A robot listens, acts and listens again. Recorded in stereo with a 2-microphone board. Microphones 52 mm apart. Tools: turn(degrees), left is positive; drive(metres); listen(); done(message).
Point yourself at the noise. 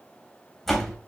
turn(degrees=30)
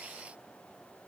listen()
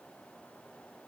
done("I heard a door slam, but can't make it out now. It was about 20° right or 140° left.")